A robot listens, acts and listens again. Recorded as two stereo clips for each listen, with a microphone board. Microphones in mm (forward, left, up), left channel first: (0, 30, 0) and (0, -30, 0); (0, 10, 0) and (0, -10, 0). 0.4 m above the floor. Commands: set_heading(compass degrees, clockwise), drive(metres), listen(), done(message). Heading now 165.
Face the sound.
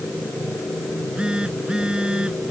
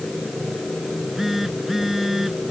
set_heading(180)
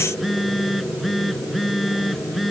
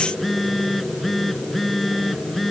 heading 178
done("Facing the phone buzzing.")